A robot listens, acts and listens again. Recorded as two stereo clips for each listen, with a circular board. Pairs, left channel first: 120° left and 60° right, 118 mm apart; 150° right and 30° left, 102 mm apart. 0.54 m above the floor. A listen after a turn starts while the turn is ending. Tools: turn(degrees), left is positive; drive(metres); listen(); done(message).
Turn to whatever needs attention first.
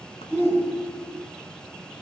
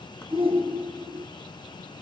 turn(degrees=50)
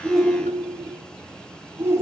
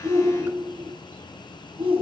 turn(degrees=10)
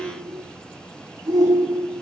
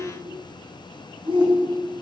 done("Facing the shout.")